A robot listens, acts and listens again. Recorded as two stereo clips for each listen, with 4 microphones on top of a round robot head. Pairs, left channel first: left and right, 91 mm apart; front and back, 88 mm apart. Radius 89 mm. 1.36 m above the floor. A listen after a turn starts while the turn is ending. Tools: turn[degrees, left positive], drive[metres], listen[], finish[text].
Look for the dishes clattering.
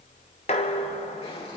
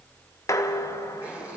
Thought: The dishes clattering: 50° left.
Action: turn[50]
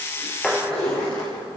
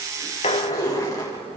Action: finish[Found it: dishes clattering, straight ahead.]